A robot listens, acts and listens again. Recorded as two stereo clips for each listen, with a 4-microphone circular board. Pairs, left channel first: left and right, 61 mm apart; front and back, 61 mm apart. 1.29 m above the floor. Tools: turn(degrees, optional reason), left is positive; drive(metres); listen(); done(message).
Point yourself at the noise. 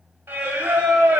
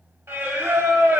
turn(degrees=-150, reason="The singing: 150° right.")
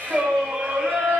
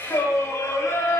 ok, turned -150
turn(degrees=-30, reason="The singing is now 30° right.")
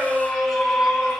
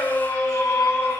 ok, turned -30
done("Facing the singing.")